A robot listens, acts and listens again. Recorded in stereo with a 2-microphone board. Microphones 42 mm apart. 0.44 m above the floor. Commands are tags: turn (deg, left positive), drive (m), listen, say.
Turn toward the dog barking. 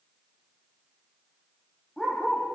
<turn deg="15"/>
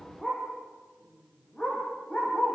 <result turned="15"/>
<turn deg="30"/>
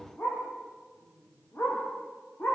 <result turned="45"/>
<turn deg="105"/>
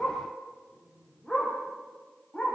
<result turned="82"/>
<turn deg="25"/>
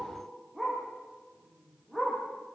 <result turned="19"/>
<say>Facing the dog barking, over 4 m away.</say>